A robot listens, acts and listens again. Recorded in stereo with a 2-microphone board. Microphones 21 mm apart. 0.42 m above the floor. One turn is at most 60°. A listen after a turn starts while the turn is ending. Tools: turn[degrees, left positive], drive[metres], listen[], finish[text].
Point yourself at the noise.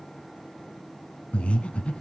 Thought: The breathing: about 65° left or 115° left.
Action: turn[60]
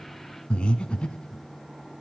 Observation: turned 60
Thought: So it is at 55° left.
Action: turn[55]
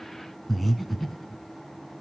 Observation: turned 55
Action: finish[Facing the breathing, 2 to 4 m away.]